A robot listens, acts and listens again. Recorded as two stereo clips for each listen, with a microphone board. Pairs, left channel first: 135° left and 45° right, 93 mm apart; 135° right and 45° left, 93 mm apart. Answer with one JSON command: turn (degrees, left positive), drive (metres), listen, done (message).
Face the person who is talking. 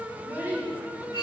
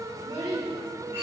{"turn": 20}
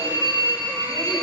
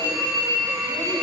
{"listen": true}
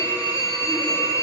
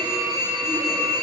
{"listen": true}
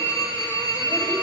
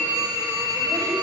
{"done": "Facing where the child speaking came from. I can't hear it now."}